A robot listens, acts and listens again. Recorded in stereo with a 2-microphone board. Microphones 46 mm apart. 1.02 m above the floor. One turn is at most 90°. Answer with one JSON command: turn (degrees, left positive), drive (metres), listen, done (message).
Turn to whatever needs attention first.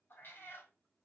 {"listen": true}
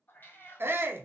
{"turn": -65}
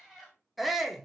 {"done": "Facing the shout, under 1 m away."}